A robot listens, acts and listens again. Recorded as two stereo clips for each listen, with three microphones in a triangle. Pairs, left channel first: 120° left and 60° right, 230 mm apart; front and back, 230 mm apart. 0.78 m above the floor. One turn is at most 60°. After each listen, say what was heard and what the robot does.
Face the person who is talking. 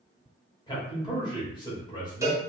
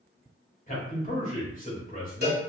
The man speaking: 50° left. Turn 50° left.
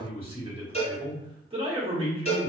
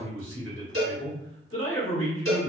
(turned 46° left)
Facing the man speaking.